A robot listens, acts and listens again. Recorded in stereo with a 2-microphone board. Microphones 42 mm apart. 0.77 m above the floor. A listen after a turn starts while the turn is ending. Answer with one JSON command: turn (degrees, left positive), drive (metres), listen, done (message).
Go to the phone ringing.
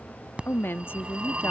{"turn": -30}
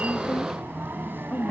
{"turn": -120}
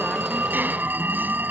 {"turn": -55}
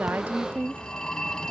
{"turn": 20}
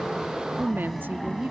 {"drive": 1.0}
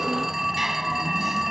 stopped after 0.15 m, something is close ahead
{"done": "Something is in my way. I am facing the phone ringing but have not reached it."}